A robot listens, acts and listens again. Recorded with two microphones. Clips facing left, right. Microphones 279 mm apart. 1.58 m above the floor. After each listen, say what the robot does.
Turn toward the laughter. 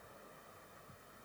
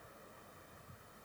Keep listening.
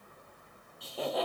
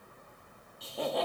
Turn 30° left.
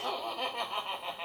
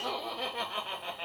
Turn 30° right.
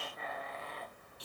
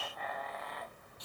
Turn 35° left.
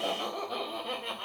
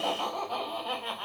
Turn 25° left.
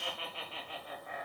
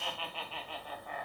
Turn 20° left.
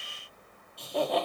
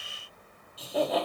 Found it: laughter, straight ahead.